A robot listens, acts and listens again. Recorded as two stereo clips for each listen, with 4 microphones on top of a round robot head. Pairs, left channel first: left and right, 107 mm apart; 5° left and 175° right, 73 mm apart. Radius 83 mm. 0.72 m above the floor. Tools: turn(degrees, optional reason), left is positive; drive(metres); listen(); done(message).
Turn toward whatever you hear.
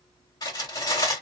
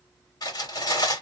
turn(degrees=35, reason="The cutlery clinking: 35° left.")
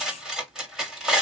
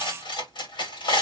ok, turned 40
done("Facing the cutlery clinking.")